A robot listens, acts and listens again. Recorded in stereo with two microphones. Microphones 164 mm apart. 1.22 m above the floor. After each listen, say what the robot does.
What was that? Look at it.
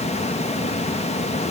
Keep listening.
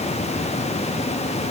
Keep listening.
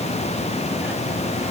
I can't make out anything.